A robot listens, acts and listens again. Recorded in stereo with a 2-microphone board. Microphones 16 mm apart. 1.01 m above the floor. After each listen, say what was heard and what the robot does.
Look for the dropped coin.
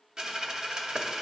The dropped coin: about 55° right or 125° right. Turn 55° right.
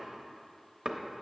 Keep listening.
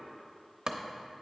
I heard a dropped coin, but can't make it out now. It was about straight ahead or 70° right.